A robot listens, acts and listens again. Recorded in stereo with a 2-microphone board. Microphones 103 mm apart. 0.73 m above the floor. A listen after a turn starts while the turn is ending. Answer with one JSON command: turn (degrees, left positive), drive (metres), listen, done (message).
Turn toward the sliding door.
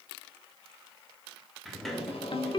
{"turn": 30}
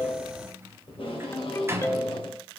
{"turn": -30}
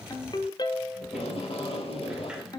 {"listen": true}
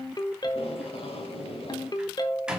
{"turn": -10}
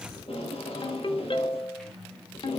{"done": "Facing the sliding door."}